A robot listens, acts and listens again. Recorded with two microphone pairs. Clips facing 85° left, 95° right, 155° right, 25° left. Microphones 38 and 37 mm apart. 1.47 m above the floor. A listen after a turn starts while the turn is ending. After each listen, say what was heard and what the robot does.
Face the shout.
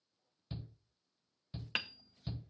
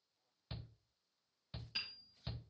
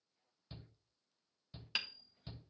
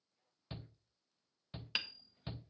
The shout: 30° right. Turn 30° right.
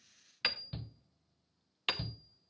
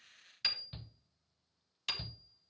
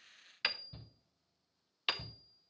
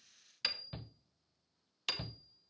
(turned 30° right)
Facing the shout.